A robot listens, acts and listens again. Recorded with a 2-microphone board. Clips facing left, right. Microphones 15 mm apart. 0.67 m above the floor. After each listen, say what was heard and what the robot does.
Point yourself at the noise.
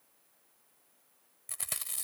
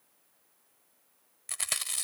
The chewing: about 40° right or 140° right. Turn 40° right.
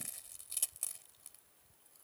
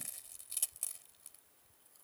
Facing the chewing.